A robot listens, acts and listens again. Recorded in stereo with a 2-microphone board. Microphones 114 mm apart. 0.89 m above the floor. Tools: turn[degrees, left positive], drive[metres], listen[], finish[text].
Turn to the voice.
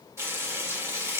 Action: listen[]
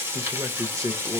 Thought: The man speaking: about 30° right or 150° right.
Action: turn[-30]
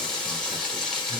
Action: listen[]
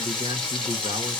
Thought: So it is at 115° right.
Action: turn[-115]
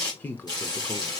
Thought: The man speaking is now 20° left.
Action: turn[20]
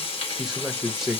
Action: finish[Facing the man speaking.]